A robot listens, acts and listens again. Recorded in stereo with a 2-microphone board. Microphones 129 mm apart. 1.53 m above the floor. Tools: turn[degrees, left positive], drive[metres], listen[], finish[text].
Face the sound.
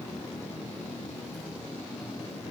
Action: listen[]
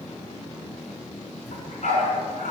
Action: turn[90]
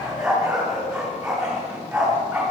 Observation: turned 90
Action: finish[Found it: a dog barking, straight ahead, over 4 m away.]